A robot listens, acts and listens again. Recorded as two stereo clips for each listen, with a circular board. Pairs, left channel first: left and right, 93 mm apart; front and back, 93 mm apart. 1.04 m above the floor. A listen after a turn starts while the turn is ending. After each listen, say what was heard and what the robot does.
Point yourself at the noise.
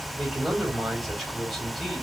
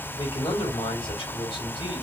Facing the man speaking, 2 to 4 m away.